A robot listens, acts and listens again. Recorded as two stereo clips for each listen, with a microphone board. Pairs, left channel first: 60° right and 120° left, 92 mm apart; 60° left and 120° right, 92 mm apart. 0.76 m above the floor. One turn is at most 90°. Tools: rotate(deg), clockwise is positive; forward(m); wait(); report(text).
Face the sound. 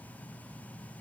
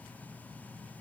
wait()
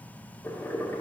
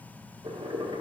rotate(90)
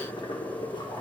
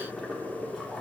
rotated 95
rotate(30)
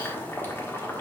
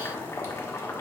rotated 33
report("Facing the boiling.")